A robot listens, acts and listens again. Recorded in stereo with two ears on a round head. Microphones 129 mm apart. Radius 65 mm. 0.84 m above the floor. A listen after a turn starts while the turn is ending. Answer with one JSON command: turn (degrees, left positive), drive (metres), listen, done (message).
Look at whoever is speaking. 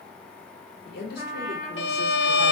{"turn": 90}
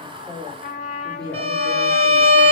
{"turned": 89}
{"turn": -30}
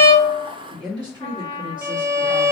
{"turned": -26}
{"turn": -35}
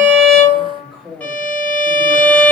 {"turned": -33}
{"done": "Found it: a woman speaking, straight ahead, 1 to 2 m away."}